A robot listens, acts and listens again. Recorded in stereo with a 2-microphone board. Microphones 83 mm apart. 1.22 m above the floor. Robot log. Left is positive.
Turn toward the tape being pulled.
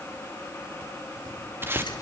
note: The tape being pulled: about 30° right or 150° right.
cmd yaw -30
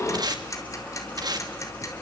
note: So it is at 120° right.
cmd yaw -120
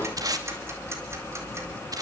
note: The tape being pulled is now 50° right.
cmd yaw -50
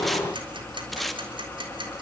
end: Facing the tape being pulled.